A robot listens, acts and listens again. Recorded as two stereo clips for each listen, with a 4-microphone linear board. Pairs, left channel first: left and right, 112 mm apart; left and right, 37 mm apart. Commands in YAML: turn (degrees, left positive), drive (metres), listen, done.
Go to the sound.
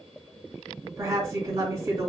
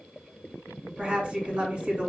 turn: -30
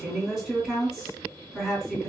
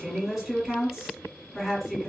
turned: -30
drive: 1.0
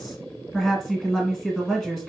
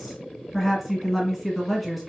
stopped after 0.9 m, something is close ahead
done: "Arrived at the woman speaking, straight ahead."